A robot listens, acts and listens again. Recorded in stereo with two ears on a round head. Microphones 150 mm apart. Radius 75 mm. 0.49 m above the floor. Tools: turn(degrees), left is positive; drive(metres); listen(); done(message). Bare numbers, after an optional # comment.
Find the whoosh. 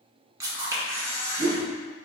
# The whoosh: about 65° right or 115° right.
turn(-65)
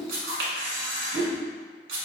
# So it is at 45° right.
turn(-45)
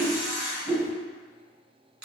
# The whoosh is now 25° right.
turn(-25)
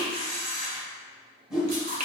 done("Facing the whoosh, under 1 m away.")